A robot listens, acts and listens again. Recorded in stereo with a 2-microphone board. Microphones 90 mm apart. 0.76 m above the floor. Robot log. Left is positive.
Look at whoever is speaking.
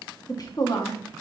note: The woman speaking: about 45° left or 135° left.
cmd yaw +45
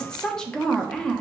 note: So it is at 10° left.
cmd yaw +10
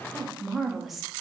end: Facing the woman speaking.